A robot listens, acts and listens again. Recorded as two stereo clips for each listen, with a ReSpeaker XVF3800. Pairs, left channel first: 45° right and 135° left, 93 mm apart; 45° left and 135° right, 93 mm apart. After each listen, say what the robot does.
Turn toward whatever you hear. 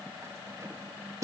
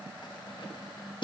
Turn 80° left.
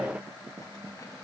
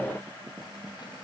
Keep listening.
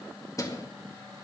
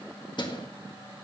Turn 10° left.
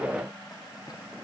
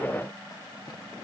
Keep listening.
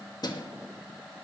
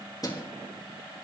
Found it: keys jangling, straight ahead.